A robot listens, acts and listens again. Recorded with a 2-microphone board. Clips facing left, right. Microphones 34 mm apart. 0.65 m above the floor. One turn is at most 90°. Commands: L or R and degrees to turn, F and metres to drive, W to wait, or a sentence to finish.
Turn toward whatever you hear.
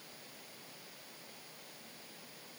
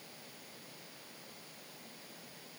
W
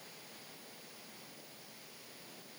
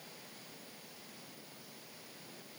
W
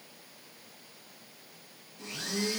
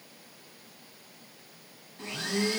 R45
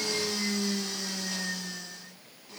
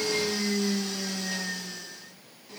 Facing the blender.